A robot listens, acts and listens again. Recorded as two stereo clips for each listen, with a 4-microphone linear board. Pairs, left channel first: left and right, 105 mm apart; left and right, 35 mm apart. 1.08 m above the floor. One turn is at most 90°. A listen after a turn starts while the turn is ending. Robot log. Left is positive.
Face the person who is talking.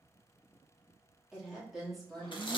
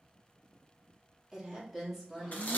cmd yaw +30
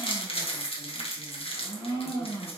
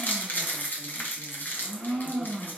cmd idle
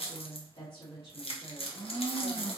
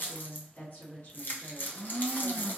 note: So it is at 130° left.
cmd yaw +90
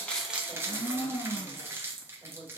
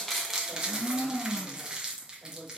note: The woman speaking is now 10° left.
cmd yaw +10
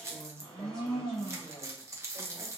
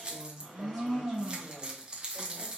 end: Found it: a woman speaking, straight ahead.